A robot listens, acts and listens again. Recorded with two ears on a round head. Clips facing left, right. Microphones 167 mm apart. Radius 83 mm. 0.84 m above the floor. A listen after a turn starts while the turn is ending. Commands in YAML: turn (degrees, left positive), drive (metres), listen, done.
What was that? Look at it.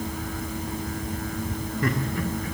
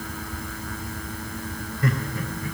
turn: 45
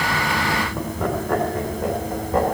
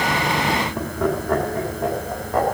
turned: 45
done: "Facing the laughter."